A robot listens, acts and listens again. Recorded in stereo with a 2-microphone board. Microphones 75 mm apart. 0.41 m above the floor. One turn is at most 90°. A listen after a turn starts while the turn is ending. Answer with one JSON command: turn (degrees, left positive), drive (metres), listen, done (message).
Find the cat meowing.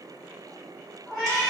{"turn": 30}
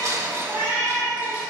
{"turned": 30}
{"done": "Facing the cat meowing, 1 to 2 m away."}